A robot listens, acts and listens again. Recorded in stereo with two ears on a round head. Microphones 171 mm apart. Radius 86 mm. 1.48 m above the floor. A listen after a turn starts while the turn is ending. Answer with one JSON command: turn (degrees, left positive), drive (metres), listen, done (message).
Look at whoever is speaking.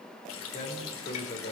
{"turn": 40}
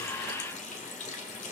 {"listen": true}
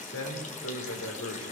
{"turn": 95}
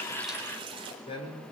{"turn": 30}
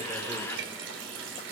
{"listen": true}
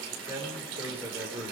{"turn": -10}
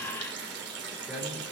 {"done": "Found it: a man speaking, straight ahead."}